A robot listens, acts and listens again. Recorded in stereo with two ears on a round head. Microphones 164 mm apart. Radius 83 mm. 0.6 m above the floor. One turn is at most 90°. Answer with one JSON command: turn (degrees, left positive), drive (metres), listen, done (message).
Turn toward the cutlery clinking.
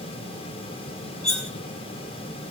{"turn": 35}
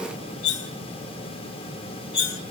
{"turn": 90}
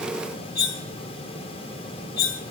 {"turn": 55}
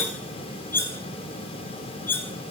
{"turn": 10}
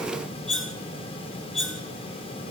{"done": "Found it: cutlery clinking, straight ahead."}